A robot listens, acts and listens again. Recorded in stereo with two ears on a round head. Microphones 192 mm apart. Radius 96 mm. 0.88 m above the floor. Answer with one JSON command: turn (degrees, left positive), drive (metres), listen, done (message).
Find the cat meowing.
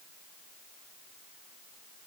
{"listen": true}
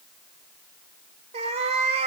{"turn": -30}
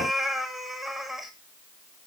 {"done": "Facing the cat meowing, 1 to 2 m away."}